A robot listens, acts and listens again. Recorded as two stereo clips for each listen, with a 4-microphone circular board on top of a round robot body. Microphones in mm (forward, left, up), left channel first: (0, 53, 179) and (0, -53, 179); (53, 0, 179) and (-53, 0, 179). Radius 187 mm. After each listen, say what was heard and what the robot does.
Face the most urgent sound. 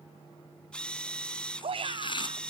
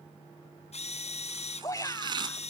The shout: 60° right. Turn 60° right.
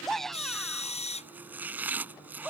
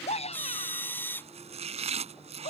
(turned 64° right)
Facing the shout.